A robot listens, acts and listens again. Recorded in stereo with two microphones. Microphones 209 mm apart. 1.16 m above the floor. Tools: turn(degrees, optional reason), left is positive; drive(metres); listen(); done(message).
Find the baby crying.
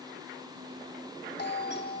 listen()
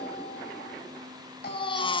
turn(degrees=25, reason="The baby crying: about 25° left or 155° left.")
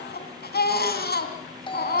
turn(degrees=130, reason="So it is at 130° left.")
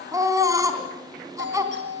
turn(degrees=-15, reason="The baby crying is now 15° right.")
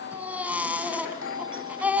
done("Facing the baby crying.")